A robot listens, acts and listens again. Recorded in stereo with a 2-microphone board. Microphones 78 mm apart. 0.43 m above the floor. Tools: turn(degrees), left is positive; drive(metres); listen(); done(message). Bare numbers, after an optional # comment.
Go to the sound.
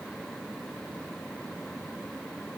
listen()
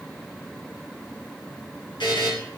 # The buzzer: about 70° left or 110° left.
turn(70)
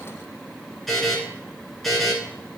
drive(1.0)
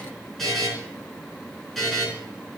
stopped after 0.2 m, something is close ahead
done("Blocked. The buzzer is further on, straight ahead.")